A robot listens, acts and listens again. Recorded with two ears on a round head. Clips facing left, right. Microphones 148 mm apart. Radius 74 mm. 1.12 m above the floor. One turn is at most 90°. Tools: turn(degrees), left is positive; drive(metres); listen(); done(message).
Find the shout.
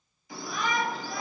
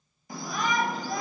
turn(degrees=-40)
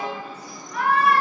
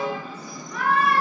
turn(degrees=-90)
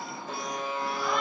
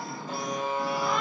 done("Facing the shout.")